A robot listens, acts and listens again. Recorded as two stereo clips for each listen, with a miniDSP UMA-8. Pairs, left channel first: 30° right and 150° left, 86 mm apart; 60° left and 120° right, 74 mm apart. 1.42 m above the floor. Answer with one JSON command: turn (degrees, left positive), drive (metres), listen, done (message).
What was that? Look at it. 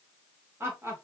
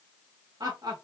{"turn": -150}
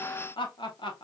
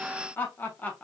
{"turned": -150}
{"turn": -10}
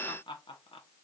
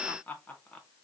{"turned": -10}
{"turn": -15}
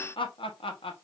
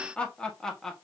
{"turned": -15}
{"turn": -25}
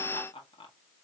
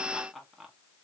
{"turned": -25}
{"turn": -30}
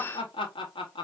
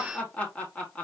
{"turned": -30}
{"turn": -15}
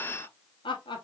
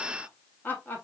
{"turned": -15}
{"done": "Facing the laughter."}